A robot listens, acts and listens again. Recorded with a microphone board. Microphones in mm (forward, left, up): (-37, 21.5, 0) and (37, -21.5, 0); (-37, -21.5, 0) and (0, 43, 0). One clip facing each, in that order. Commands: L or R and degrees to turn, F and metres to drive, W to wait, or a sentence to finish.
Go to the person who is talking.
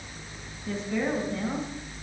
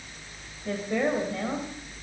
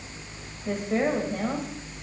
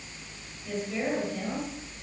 R75
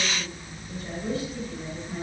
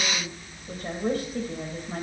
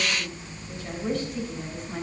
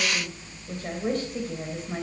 L10
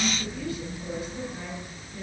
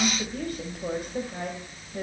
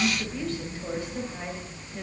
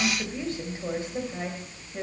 F1.0
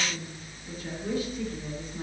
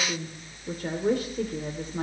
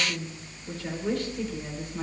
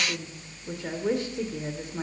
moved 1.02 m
F1.0
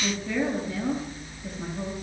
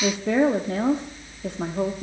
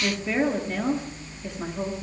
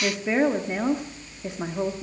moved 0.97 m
R10
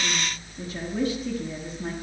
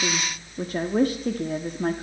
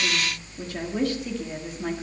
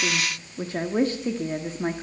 F1.0
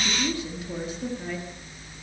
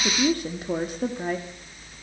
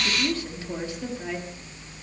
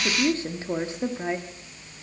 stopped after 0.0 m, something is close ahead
I am next to the woman speaking.